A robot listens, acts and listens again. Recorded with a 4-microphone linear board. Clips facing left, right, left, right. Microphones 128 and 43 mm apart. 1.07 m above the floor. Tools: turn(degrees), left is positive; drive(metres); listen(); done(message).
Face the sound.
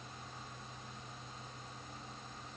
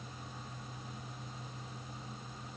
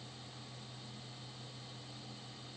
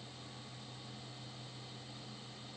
listen()
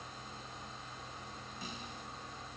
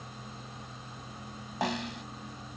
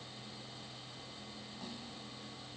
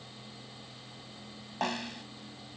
turn(degrees=-90)
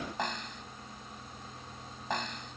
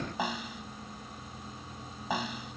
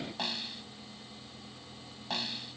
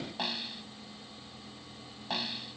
done("Facing the snare drum.")